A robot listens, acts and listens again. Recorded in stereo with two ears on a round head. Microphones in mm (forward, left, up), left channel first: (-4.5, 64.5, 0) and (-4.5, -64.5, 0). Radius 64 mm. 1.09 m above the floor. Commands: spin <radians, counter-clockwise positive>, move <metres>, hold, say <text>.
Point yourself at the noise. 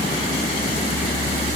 hold
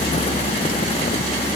hold
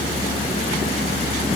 say I can't make out anything to turn to.